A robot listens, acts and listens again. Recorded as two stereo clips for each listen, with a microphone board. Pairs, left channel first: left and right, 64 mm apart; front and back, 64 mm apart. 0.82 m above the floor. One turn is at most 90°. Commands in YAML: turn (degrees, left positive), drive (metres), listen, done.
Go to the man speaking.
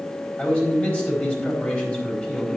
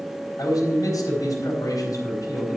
turn: 20
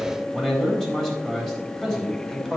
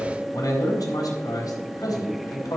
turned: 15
drive: 1.0
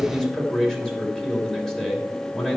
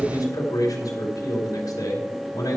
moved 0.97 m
turn: 10
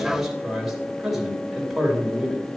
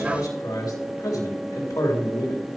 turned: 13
drive: 1.0
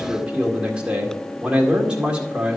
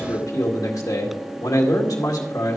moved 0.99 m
turn: -15
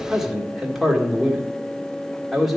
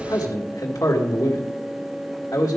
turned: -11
drive: 1.0
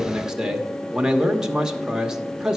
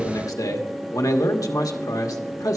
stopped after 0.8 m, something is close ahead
turn: -10
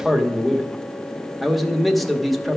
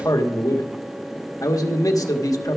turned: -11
done: "Arrived at the man speaking, straight ahead."